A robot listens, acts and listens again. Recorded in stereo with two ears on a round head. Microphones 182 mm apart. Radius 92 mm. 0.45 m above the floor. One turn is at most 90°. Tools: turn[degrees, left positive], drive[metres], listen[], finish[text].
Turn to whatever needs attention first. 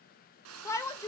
Thought: The shout: about 15° left or 165° left.
Action: turn[15]
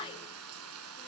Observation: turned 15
Thought: So it is at 155° left.
Action: turn[90]
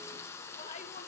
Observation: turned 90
Thought: Nothing new. It was at 65° left.
Action: turn[65]
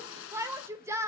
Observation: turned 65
Thought: The shout is now 15° right.
Action: turn[-15]
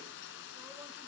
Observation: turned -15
Action: listen[]
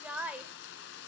Action: finish[Facing the shout, 1 to 2 m away.]